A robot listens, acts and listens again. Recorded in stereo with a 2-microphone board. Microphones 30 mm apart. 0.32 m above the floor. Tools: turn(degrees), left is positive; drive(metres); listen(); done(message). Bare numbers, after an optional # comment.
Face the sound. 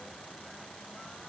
listen()
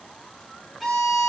turn(-30)
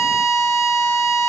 # So it is at 140° right.
turn(-140)
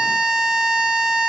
# The violin is now 35° right.
turn(-35)
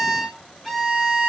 done("Facing the violin, 2 to 4 m away.")